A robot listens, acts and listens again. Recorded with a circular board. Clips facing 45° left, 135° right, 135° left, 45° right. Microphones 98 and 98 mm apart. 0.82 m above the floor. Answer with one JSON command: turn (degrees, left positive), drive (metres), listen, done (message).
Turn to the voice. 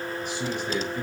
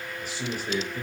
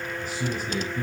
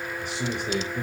{"turn": -55}
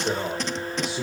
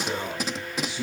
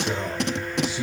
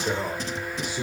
{"turn": -10}
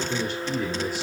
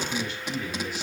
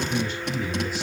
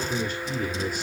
{"done": "Facing the man speaking, 2 to 4 m away."}